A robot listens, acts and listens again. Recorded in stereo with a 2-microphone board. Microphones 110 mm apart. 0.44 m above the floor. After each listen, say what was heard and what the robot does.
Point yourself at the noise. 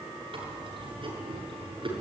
The chewing: about 50° right or 130° right. Turn 50° right.
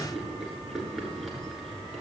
Facing the chewing, over 4 m away.